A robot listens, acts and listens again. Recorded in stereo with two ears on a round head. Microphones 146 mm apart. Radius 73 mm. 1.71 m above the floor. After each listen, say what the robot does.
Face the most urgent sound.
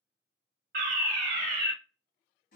Turn 55° right.
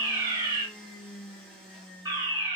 Turn 30° right.
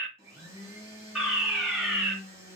Found it: a fire alarm, straight ahead, under 1 m away.